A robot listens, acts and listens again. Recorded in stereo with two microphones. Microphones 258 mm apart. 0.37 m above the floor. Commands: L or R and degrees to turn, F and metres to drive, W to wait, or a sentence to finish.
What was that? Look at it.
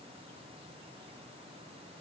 W
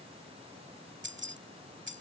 R45
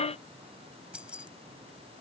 Found it: keys jangling, straight ahead.